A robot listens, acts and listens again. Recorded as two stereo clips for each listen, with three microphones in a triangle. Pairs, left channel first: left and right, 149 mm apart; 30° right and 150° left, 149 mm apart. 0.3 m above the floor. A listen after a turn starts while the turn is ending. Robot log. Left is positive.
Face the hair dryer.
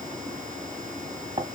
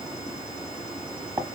cmd idle
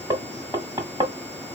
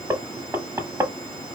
cmd idle
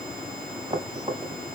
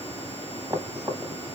end: I can't make out a hair dryer, only knocking.